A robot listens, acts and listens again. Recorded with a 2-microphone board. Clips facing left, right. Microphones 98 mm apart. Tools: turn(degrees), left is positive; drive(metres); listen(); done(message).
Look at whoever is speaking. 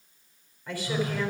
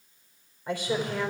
turn(degrees=-15)
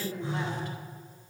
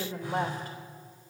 turn(degrees=-145)
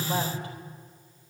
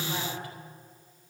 listen()
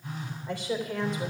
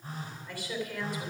turn(degrees=20)
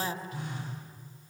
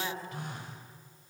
done("Facing the woman speaking, 2 to 4 m away.")